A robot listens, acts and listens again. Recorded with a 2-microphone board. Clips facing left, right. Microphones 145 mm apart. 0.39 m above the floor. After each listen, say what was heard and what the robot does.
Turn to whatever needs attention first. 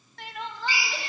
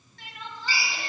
Turn 90° left.
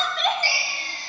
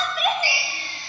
So it is at 10° right. Turn 10° right.
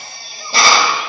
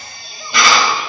Keep listening.
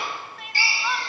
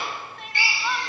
Found it: crying, straight ahead.